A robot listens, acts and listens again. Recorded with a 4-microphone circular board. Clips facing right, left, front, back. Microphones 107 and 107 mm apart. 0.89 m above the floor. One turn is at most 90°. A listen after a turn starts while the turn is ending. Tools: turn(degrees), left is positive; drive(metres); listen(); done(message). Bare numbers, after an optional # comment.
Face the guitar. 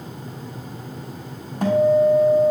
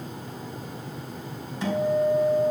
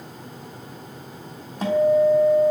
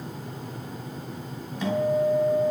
# The guitar: 50° right.
turn(-50)
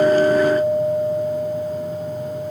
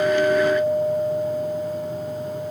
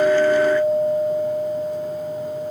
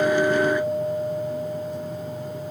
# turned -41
# The guitar is now 10° right.
turn(-10)
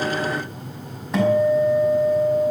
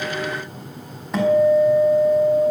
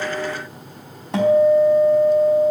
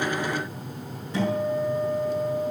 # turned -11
done("Found it: a guitar, straight ahead, over 4 m away.")